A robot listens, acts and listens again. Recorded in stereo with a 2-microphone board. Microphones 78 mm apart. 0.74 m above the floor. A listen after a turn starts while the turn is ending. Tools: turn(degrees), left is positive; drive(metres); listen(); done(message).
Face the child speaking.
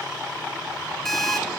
listen()
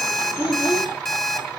turn(degrees=90)
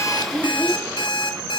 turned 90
listen()
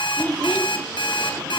turn(degrees=15)
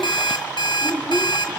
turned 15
turn(degrees=10)
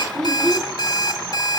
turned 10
done("Facing the child speaking.")